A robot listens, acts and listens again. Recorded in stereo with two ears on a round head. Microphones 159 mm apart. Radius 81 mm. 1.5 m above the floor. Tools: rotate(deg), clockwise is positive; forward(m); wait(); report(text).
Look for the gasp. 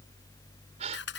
rotate(35)
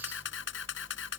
wait()
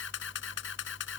report("I heard a gasp, but can't make it out now. It was about straight ahead or 110° right.")